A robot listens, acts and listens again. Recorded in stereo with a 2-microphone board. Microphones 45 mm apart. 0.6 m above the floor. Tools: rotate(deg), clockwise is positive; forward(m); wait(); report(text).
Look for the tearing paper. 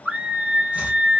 wait()
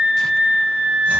wait()
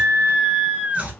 report("I can't make out tearing paper to turn to.")